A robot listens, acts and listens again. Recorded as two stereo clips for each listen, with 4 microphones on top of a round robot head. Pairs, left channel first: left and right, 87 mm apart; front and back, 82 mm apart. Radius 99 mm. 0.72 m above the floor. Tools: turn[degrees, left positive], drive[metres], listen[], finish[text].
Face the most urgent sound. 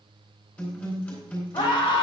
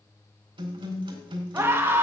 Thought: The scream: 120° left.
Action: turn[120]
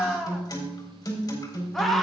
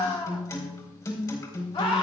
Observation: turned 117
Action: finish[Found it: a scream, straight ahead, 1 to 2 m away.]